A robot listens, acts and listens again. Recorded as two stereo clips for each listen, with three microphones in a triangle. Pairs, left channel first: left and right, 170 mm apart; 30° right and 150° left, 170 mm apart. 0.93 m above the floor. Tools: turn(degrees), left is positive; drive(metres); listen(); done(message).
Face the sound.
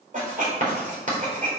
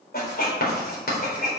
turn(degrees=-50)
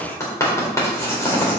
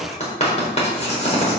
turn(degrees=15)
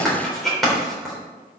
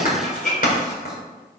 done("Facing the writing.")